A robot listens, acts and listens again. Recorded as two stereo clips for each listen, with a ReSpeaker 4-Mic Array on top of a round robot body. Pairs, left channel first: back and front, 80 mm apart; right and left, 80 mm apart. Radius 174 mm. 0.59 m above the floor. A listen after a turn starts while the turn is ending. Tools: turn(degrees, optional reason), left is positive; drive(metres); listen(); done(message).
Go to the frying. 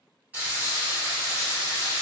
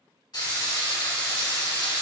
turn(degrees=-65, reason="The frying: 65° right.")
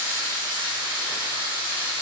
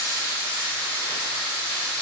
turn(degrees=-15, reason="The frying is now 15° right.")
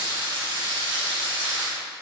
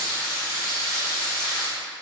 drive(metres=1.0)
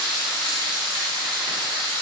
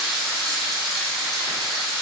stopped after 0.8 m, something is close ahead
done("Arrived at the frying, straight ahead.")